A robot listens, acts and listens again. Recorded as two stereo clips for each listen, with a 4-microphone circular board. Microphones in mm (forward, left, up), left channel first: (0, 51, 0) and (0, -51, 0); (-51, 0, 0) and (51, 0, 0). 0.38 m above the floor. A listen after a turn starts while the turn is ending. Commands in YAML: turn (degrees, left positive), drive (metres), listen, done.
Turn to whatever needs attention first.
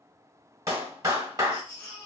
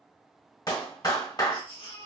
turn: 165
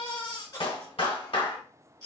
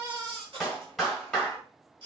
turn: 40
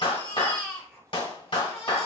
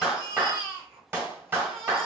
turn: 10
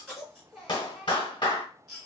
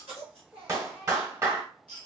done: "Found it: a baby crying, straight ahead."